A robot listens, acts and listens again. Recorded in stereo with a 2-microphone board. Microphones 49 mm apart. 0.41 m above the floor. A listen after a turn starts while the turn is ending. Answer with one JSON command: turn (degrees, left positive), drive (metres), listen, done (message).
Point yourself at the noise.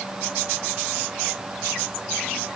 {"listen": true}
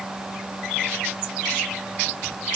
{"listen": true}
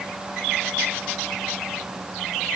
{"done": "I can't make out anything."}